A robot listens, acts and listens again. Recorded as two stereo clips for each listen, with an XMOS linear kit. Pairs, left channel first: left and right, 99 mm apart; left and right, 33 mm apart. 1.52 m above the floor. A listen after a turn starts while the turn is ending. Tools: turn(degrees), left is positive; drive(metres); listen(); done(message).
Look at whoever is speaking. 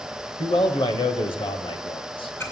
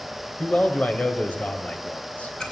turn(degrees=60)
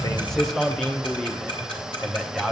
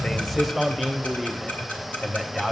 done("Found it: a man speaking, straight ahead, under 1 m away.")